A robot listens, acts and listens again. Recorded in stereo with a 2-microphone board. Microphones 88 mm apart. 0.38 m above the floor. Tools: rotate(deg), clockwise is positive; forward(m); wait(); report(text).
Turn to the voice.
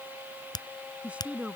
rotate(15)
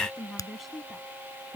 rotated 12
rotate(-30)
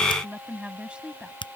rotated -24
rotate(10)
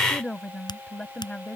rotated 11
rotate(-15)
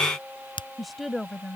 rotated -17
report("Found it: a woman speaking, straight ahead.")